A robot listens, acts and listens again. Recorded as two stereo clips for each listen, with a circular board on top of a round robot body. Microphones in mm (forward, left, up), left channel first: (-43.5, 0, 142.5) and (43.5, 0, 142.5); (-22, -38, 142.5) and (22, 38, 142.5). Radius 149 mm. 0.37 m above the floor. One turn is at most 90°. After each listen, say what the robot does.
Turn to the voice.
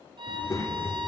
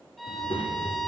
Turn 90° right.
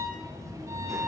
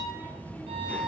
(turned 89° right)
Turn 50° right.
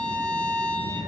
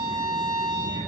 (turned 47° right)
Found it: a child speaking, straight ahead.